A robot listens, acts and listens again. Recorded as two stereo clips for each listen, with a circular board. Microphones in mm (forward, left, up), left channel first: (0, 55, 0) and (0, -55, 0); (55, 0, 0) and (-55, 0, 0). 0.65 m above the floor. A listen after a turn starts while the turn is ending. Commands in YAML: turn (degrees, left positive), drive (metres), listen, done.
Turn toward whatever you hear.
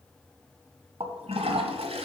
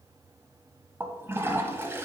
turn: -110
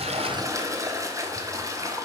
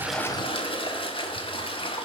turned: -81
turn: -30
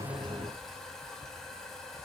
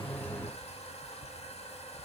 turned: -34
done: "Found it: a toilet flushing, straight ahead."